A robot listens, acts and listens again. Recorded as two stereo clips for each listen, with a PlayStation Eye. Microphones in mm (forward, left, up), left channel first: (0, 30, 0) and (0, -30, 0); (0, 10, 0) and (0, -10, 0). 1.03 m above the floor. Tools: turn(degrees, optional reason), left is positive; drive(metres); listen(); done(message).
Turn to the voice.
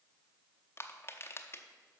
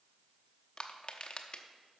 listen()
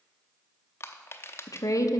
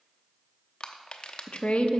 turn(degrees=60, reason="The woman speaking: about 60° left or 120° left.")
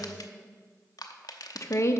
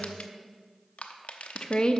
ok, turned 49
turn(degrees=60, reason="So it is at 60° left.")
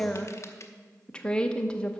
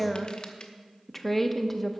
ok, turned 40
turn(degrees=15, reason="The woman speaking is now 15° left.")
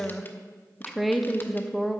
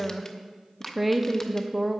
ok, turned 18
done("Found it: a woman speaking, straight ahead.")